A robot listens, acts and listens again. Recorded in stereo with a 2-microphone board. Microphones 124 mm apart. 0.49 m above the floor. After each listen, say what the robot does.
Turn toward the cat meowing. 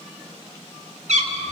Turn 90° right.
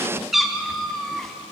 Facing the cat meowing.